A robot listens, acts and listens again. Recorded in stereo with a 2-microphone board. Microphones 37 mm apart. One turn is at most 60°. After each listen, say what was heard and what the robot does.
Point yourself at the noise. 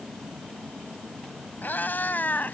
The cat meowing: about 55° left or 125° left. Turn 55° left.
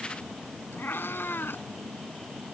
So it is at 80° left. Turn 60° left.
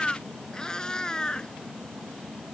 The cat meowing is now 20° left. Turn 20° left.
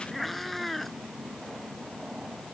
Found it: a cat meowing, straight ahead.